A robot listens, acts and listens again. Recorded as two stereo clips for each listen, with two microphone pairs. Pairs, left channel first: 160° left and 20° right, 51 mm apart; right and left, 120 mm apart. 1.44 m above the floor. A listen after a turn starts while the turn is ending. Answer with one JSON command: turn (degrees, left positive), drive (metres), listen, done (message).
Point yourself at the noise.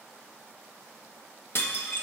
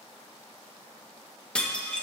{"turn": -170}
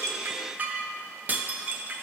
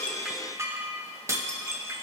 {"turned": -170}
{"turn": 30}
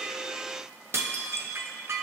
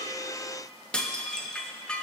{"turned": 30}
{"done": "Facing the dishes clattering."}